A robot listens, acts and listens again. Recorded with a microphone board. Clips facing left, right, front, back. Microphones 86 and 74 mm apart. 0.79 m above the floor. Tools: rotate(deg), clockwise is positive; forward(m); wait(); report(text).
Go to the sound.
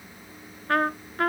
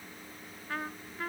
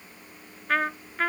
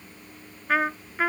rotate(-100)
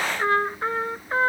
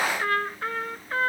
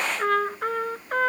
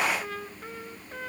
rotate(-25)
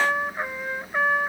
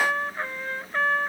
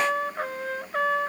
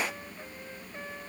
rotate(-10)
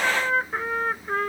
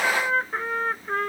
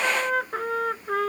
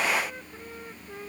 forward(1.0)
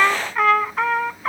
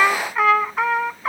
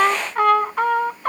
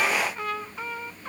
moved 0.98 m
forward(1.0)
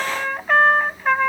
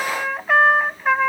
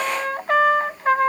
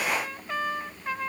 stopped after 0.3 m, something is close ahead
report("I am next to the trumpet.")